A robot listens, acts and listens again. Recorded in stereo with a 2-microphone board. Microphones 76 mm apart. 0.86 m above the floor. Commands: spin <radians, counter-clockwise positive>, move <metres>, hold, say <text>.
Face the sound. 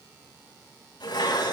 spin 1.57
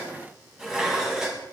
say Found it: dishes clattering, straight ahead.